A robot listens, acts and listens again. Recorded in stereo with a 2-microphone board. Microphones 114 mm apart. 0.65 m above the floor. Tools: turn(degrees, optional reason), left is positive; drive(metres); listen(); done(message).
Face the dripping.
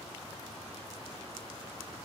listen()
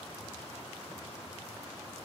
listen()
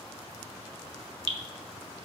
turn(degrees=-45, reason="The dripping: about 45° right or 135° right.")
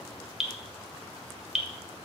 done("Found it: dripping, straight ahead, 1 to 2 m away.")